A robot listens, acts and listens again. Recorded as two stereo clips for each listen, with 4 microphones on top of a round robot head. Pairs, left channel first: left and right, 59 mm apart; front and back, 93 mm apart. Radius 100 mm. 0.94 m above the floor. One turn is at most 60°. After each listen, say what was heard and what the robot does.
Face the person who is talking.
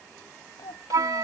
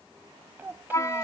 The child speaking: 110° left. Turn 60° left.
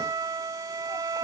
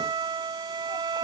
Nothing new. It was at 50° left. Turn 50° left.
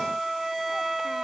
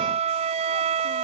Keep listening.
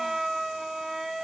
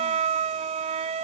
I heard a child speaking from this way, but can't make it out now.